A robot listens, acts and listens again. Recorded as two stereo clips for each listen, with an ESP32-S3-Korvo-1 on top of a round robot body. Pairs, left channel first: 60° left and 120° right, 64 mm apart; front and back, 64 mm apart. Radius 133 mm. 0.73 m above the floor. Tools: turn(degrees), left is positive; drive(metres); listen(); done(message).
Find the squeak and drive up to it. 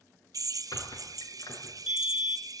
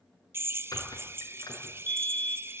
turn(degrees=30)
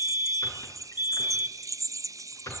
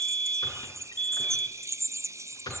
turn(degrees=15)
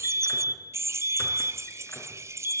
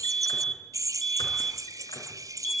listen()
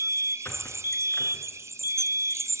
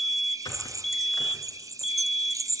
drive(metres=1.0)
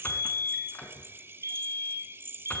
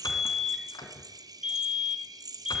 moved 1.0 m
drive(metres=1.0)
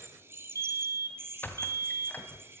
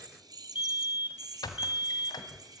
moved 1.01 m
drive(metres=1.0)
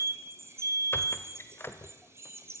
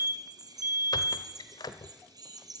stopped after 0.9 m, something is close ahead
done("I am next to the squeak.")